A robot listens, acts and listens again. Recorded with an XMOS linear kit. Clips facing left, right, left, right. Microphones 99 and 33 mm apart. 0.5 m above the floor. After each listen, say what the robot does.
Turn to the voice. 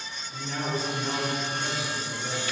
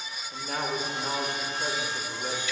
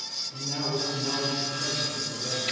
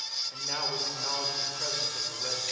Turn 55° right.
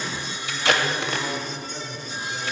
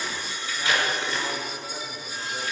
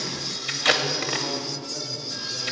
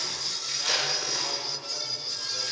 Turn 15° right.
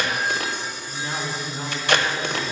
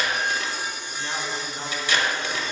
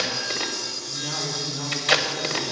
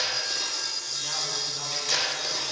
Facing the man speaking, 1 to 2 m away.